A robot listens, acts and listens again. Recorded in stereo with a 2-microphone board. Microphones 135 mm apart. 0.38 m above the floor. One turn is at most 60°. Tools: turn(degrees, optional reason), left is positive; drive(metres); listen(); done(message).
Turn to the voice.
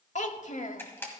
turn(degrees=60, reason="The child speaking: about 60° left or 120° left.")
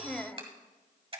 turn(degrees=10, reason="So it is at 10° left.")
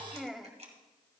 done("Found it: a child speaking, straight ahead, under 1 m away.")